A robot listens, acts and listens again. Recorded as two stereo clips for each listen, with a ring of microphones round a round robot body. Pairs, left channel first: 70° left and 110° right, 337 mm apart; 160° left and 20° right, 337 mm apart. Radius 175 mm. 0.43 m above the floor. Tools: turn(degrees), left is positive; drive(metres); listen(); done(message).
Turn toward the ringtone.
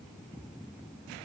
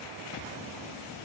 listen()
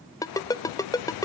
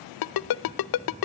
turn(degrees=145)
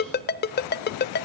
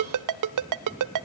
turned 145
done("Found it: a ringtone, straight ahead, under 1 m away.")